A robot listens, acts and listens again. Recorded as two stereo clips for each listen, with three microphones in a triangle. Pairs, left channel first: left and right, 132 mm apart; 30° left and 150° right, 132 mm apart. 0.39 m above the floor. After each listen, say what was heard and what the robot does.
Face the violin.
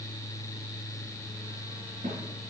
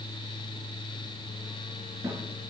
Keep listening.
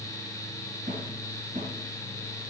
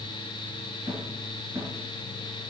Keep listening.
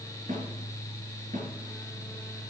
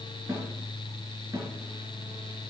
I can't make out a violin, only a snare drum.